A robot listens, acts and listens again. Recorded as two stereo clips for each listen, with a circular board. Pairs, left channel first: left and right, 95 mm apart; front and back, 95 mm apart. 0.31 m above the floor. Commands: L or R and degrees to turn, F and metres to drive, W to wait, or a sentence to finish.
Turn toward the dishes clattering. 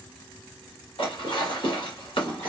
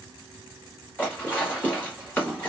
L70
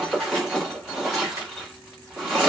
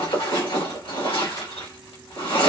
Found it: dishes clattering, straight ahead.